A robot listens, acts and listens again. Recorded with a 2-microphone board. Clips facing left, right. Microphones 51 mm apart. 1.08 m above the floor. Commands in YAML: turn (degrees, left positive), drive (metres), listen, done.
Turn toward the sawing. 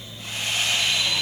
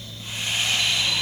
turn: 65
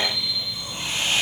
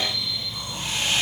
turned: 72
turn: 40
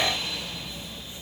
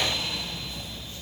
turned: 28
turn: 10
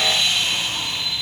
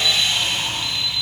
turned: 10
listen: true
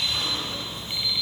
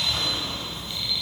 done: "Facing where the sawing came from. I can't hear it now."